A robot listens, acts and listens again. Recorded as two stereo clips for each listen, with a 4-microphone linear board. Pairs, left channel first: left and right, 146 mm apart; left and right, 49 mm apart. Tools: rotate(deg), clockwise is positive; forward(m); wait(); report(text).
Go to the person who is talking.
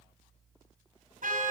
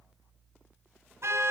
wait()
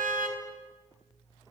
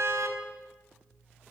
wait()
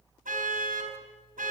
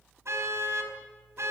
report("I can't make out anyone speaking to turn to.")